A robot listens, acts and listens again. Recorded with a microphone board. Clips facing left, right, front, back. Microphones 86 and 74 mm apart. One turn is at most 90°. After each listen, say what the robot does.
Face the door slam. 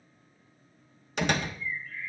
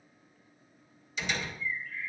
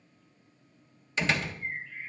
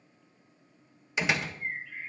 Turn 90° left.
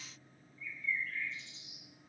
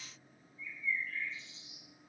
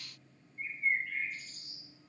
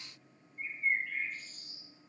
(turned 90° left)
Turn 15° left.
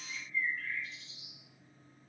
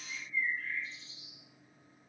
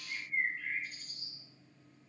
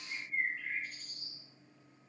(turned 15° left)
Facing where the door slam came from. I can't hear it now.